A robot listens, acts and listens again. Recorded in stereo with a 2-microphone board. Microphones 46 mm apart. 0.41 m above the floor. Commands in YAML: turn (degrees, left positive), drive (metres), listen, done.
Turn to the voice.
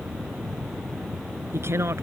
turn: -70
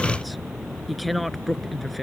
done: "Facing the woman speaking."